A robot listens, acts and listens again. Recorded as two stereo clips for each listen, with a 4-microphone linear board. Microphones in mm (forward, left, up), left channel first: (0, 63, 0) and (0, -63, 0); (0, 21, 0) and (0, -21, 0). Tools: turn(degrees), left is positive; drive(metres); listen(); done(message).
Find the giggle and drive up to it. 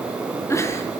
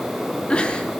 turn(degrees=20)
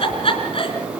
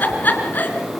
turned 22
turn(degrees=135)
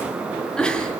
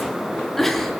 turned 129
drive(metres=1.0)
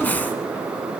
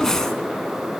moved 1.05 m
turn(degrees=15)
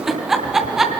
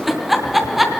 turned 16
drive(metres=1.0)
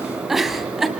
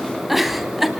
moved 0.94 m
drive(metres=1.0)
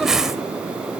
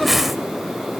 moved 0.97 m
drive(metres=1.0)
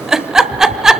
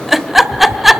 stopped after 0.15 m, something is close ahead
done("I am next to the giggle.")